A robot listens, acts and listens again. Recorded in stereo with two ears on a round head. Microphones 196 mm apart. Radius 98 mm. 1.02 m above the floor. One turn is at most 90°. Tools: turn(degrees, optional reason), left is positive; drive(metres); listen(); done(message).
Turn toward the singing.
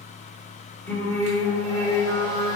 turn(degrees=15, reason="The singing: about 15° left or 165° left.")
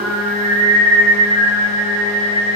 turn(degrees=20, reason="The singing: about 20° left or 160° left.")
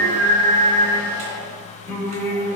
turn(degrees=30)
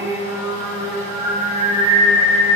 turn(degrees=-15, reason="So it is at 15° right.")
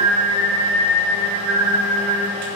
done("Found it: singing, straight ahead.")